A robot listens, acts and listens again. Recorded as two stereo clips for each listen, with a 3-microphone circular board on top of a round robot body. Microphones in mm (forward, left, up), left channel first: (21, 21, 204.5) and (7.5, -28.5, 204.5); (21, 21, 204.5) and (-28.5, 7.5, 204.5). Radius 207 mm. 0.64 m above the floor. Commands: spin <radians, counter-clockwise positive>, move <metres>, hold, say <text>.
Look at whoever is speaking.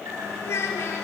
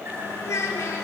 spin 0.70
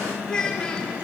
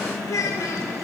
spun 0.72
say Found it: a child speaking, straight ahead, 2 to 4 m away.